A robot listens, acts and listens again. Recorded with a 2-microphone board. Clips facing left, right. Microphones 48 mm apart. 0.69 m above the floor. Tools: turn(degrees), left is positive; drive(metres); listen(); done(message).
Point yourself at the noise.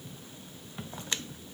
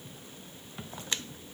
listen()
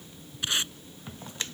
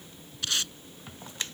turn(degrees=20)
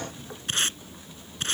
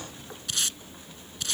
turn(degrees=140)
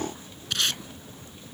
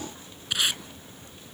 turn(degrees=-15)
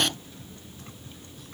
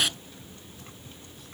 done("Facing the tape being pulled.")